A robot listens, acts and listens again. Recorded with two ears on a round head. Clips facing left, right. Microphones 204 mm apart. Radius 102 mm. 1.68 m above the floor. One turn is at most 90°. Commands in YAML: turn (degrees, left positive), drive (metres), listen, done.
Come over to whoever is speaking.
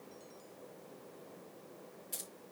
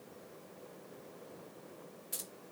listen: true
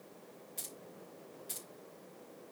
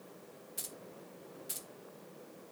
listen: true
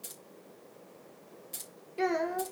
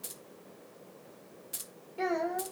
turn: 30
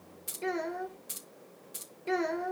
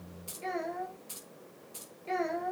turn: 90
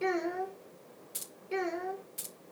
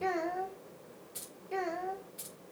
turn: 30
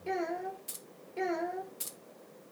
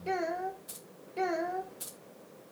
drive: 1.0
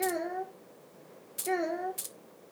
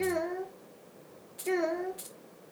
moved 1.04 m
drive: 1.0
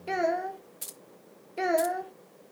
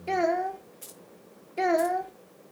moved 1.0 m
drive: 1.0
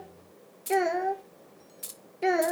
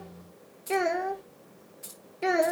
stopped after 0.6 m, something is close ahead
done: "Arrived at the child speaking, straight ahead."